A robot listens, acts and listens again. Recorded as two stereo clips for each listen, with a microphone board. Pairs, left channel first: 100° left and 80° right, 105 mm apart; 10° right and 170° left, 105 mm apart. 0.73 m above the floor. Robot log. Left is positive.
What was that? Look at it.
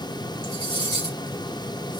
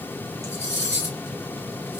note: The cutlery clinking: 55° left.
cmd yaw +55
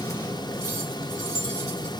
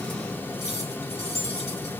cmd idle
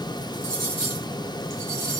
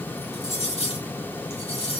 note: The cutlery clinking is now 15° right.
cmd yaw -15
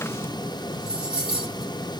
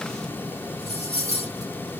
end: Facing the cutlery clinking, 1 to 2 m away.